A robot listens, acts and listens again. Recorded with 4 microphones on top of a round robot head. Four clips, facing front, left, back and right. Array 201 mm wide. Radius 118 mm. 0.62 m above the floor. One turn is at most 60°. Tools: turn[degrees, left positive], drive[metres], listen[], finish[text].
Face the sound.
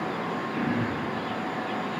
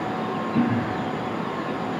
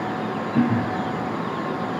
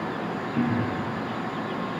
Thought: The throat clearing: 130° left.
Action: turn[60]
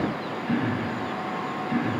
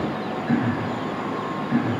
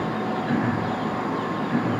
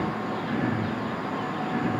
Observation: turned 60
Thought: The throat clearing is now 65° left.
Action: turn[60]
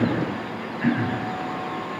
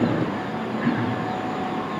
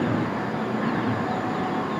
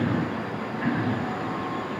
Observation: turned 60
Action: finish[Facing the throat clearing.]